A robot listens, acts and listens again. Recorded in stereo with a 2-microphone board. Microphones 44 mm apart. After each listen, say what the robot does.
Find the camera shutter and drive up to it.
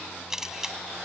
Turn 30° right.
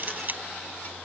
Turn 135° right.
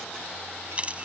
Turn 30° right.
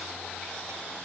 Keep listening.
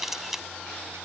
Drive 1.0 m forward.
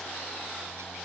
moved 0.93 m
Keep listening.
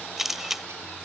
Drive 1.0 m forward.
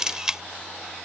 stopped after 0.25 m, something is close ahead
Turn 15° right.
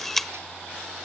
Arrived at the camera shutter, straight ahead.